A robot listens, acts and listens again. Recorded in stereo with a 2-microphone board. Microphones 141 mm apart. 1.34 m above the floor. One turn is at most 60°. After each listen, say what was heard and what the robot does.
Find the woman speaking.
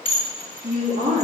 Turn 60° right.
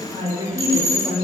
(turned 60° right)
So it is at 25° right. Turn 25° right.
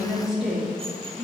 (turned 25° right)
Found it: a woman speaking, straight ahead.